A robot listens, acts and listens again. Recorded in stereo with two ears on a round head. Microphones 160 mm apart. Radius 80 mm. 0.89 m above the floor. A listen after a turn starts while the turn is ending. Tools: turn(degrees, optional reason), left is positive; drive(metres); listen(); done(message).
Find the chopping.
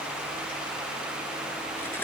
listen()
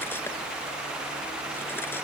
listen()
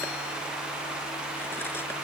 done("I can't make out chopping.")